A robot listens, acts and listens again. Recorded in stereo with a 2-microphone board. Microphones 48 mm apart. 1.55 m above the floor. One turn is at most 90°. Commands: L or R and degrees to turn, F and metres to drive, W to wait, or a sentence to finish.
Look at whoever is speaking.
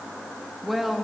R30
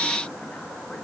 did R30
W
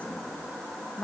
L25
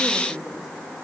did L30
Found it: a woman speaking, straight ahead, 2 to 4 m away.